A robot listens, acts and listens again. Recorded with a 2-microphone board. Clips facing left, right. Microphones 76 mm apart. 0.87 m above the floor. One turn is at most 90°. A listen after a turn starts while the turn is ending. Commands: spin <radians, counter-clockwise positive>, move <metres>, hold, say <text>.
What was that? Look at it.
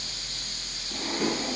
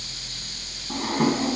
spin -0.96
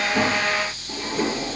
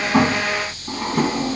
spin -1.13
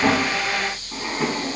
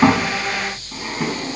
say Found it: a drawer, straight ahead, 2 to 4 m away.